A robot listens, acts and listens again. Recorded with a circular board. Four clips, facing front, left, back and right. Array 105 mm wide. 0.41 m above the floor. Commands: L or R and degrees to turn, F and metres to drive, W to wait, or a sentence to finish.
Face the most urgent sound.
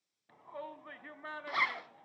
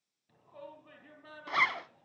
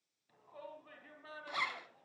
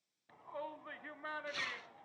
R50
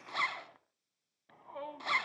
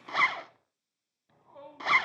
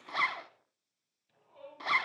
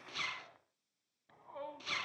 R20
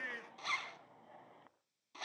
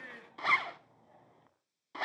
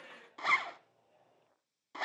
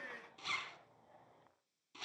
Found it: a shout, straight ahead.